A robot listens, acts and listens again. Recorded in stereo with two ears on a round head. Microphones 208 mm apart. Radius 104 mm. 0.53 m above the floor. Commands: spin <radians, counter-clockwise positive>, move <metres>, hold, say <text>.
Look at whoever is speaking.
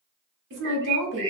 spin -0.96
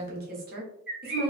spin -0.87
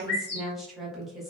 say Found it: a woman speaking, straight ahead, 1 to 2 m away.